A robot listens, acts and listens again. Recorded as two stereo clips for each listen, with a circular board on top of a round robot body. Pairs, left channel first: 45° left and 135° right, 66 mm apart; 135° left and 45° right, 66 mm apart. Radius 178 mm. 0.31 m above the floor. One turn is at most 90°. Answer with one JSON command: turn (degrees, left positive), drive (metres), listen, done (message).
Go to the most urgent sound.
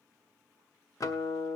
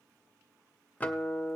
{"listen": true}
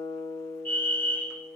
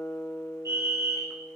{"turn": -10}
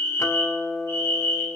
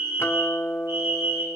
{"drive": 1.0}
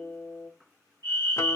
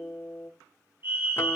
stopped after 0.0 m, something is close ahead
{"done": "Something is in my way. I am facing the fire alarm but have not reached it."}